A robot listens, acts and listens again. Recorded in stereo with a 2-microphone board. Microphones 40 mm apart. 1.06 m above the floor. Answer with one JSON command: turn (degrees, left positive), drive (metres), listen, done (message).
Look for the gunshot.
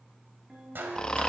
{"turn": -60}
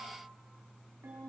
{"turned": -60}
{"listen": true}
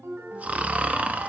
{"done": "I heard a gunshot, but can't make it out now. It was about straight ahead or 60° right."}